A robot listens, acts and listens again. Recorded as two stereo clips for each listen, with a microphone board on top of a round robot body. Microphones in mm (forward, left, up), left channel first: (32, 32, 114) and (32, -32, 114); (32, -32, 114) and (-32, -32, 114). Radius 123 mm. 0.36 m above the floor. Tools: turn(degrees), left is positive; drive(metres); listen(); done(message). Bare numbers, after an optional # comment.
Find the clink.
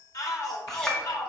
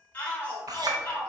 # The clink: 170° left.
turn(170)
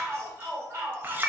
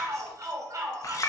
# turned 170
# The clink is now 30° right.
turn(-30)
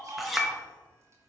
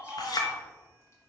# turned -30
done("Facing the clink, 1 to 2 m away.")